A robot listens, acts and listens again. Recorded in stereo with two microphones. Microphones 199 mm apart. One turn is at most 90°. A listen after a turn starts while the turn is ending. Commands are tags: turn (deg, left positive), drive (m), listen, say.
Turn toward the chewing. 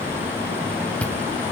<turn deg="30"/>
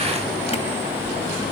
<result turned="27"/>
<listen/>
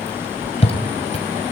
<turn deg="90"/>
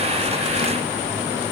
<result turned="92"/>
<turn deg="55"/>
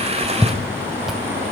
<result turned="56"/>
<say>Facing the chewing, 2 to 4 m away.</say>